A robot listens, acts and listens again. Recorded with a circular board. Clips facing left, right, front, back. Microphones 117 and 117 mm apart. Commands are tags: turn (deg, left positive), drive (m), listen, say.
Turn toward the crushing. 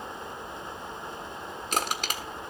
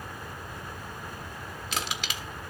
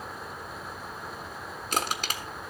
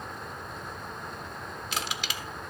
<turn deg="45"/>
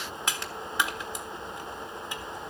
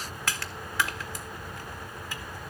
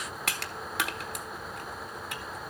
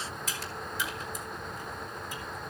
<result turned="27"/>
<turn deg="20"/>
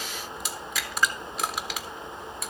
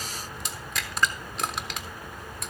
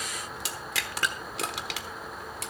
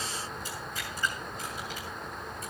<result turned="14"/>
<say>Facing the crushing, 1 to 2 m away.</say>